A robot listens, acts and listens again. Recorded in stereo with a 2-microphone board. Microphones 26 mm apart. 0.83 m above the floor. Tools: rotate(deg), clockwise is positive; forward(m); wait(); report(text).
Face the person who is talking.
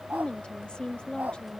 rotate(-40)
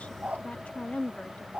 rotate(-100)
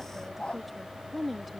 report("Found it: a woman speaking, straight ahead.")